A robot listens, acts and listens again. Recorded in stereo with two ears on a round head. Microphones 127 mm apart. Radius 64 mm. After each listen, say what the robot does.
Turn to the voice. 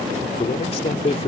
Turn 45° left.
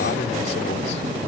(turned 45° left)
Keep listening.
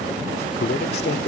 Turn 95° left.
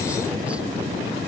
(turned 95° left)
Keep listening.
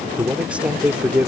Turn 10° right.
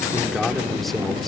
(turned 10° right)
Facing the man speaking.